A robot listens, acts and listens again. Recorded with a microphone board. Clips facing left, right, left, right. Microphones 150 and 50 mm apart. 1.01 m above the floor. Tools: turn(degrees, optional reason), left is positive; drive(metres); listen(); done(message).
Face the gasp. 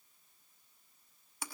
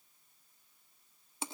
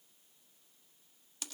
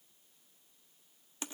listen()
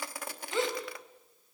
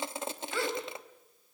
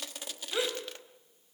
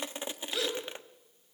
turn(degrees=20, reason="The gasp: about 20° left or 160° left.")
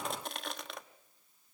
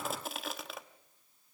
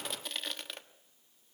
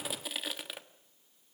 listen()
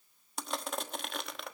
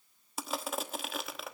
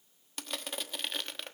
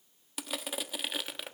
done("I heard a gasp, but can't make it out now. It was about straight ahead or 140° left.")